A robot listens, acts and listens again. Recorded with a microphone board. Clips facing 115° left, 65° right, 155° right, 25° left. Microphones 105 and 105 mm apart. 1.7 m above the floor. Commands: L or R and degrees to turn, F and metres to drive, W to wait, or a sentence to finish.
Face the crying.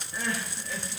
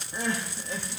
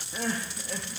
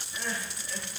R125
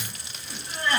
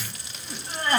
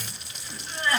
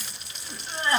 R30
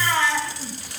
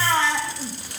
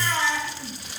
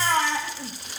R10
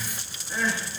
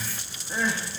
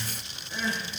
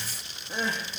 Found it: crying, straight ahead, 1 to 2 m away.